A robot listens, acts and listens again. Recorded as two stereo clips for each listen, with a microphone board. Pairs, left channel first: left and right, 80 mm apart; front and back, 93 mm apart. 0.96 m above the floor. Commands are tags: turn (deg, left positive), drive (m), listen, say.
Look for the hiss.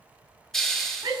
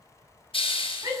<say>Found it: a hiss, straight ahead.</say>